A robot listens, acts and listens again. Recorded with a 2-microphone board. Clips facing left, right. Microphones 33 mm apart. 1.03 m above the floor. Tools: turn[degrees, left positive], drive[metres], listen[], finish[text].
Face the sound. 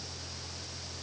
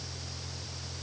Action: listen[]
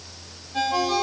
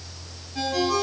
Thought: The ringtone: about 65° left or 115° left.
Action: turn[65]
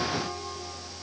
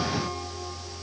Action: listen[]
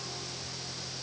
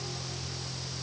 Action: listen[]
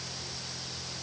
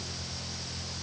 Action: finish[I heard a ringtone, but can't make it out now. It was about straight ahead or 50° left.]